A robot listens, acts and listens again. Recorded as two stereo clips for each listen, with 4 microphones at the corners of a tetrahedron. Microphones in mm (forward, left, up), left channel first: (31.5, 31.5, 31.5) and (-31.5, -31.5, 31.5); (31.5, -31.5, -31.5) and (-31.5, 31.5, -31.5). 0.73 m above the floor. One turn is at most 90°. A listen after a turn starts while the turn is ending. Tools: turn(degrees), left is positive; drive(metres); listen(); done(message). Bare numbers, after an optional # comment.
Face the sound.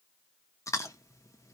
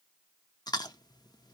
done("Facing the chewing, under 1 m away.")